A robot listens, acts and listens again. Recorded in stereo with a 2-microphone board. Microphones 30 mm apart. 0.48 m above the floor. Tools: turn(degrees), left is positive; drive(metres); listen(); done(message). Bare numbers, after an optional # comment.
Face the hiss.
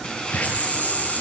# The hiss: about 55° left or 125° left.
turn(55)
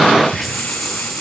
done("Facing the hiss, over 4 m away.")